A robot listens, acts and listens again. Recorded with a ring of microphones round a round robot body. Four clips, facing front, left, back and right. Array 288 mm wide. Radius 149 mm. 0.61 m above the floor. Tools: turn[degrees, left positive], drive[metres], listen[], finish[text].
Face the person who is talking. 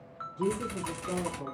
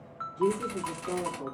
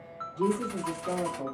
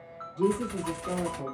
Thought: The woman speaking: 150° right.
Action: turn[-150]
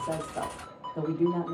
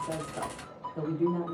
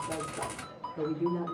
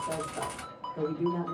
Action: finish[Found it: a woman speaking, straight ahead.]